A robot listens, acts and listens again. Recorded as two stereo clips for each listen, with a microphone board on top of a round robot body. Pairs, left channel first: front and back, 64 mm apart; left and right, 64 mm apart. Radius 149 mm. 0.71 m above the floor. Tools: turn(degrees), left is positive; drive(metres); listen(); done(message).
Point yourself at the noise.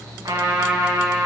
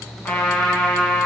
turn(degrees=160)
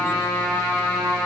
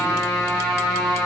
turn(degrees=45)
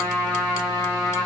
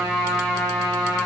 turn(degrees=20)
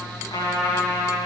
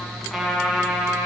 done("Facing the trumpet.")